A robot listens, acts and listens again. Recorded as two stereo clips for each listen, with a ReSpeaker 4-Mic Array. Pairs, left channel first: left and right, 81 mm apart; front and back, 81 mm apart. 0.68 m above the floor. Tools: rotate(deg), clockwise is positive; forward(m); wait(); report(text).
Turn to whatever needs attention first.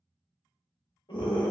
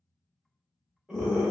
rotate(-100)
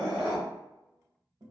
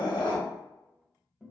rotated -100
rotate(15)
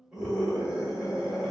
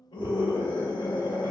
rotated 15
rotate(10)
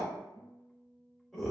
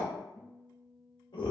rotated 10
report("Facing the scream.")